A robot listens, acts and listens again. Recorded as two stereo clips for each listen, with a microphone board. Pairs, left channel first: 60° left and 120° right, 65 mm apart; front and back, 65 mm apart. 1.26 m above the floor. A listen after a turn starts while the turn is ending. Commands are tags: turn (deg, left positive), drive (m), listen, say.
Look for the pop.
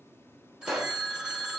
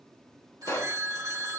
<turn deg="-35"/>
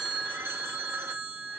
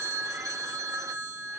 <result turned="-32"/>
<say>Facing where the pop came from. I can't hear it now.</say>